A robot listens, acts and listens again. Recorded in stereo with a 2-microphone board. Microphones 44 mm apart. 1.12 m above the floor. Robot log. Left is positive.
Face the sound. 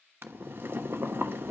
note: The boiling: about 55° right or 125° right.
cmd yaw -55
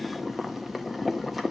end: Found it: boiling, straight ahead.